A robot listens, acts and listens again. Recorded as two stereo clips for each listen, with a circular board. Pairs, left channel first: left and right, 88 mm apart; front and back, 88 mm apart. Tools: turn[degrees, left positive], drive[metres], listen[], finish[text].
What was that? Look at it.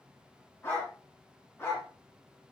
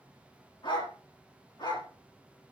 Thought: The dog barking: 25° left.
Action: turn[25]
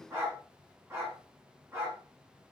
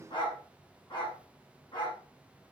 Thought: The dog barking is now 30° right.
Action: turn[-30]
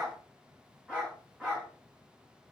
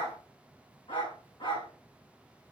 Thought: The dog barking is now 10° right.
Action: turn[-10]
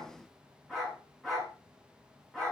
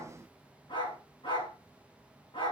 Action: finish[Found it: a dog barking, straight ahead.]